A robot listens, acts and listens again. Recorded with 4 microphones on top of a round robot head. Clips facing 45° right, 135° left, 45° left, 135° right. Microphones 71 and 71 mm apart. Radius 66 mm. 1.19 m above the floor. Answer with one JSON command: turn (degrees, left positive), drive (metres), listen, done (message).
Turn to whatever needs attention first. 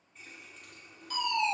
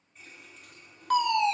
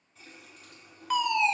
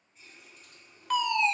{"turn": 130}
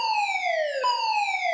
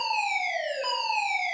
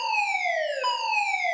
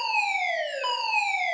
{"turn": -35}
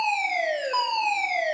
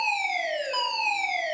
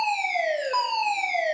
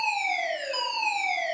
{"done": "Found it: a fire alarm, straight ahead."}